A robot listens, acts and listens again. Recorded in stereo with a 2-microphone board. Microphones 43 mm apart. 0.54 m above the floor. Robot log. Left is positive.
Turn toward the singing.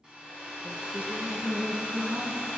note: The singing: about 40° right or 140° right.
cmd yaw -40
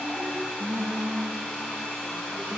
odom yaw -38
note: So it is at 115° right.
cmd yaw -115
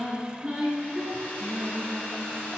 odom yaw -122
note: The singing is now 15° right.
cmd yaw -15
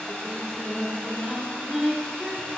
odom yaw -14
end: Facing the singing, 2 to 4 m away.